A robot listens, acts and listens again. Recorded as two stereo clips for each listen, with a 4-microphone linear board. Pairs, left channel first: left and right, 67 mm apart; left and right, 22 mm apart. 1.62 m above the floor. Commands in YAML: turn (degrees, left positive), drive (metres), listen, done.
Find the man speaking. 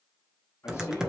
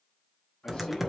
turn: 40
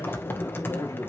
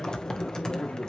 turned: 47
listen: true
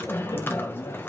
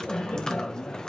listen: true
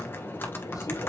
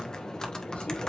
done: "I heard a man speaking, but can't make it out now. It was about 5° right or 90° left."